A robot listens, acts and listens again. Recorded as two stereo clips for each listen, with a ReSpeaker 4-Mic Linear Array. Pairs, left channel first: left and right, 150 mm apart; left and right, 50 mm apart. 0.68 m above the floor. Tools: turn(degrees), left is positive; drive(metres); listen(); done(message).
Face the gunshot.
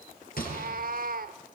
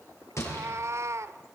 turn(degrees=90)
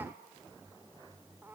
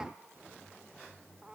done("Facing where the gunshot came from. I can't hear it now.")